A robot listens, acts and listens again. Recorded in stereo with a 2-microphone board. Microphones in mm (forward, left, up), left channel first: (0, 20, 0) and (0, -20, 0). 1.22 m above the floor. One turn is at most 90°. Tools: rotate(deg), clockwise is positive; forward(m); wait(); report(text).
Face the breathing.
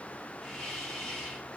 wait()
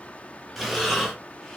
rotate(-30)
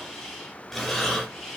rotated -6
rotate(-30)
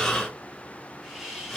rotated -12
rotate(-90)
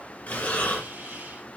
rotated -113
rotate(-45)
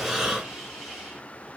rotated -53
report("Facing the breathing.")